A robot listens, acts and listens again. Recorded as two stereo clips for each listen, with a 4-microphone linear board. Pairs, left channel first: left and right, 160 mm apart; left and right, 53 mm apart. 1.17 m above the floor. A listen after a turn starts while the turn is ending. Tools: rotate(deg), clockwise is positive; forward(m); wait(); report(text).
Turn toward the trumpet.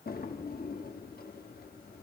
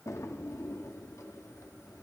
wait()
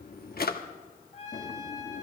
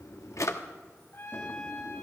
rotate(-40)
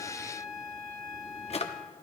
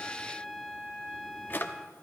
report("Found it: a trumpet, straight ahead, over 4 m away.")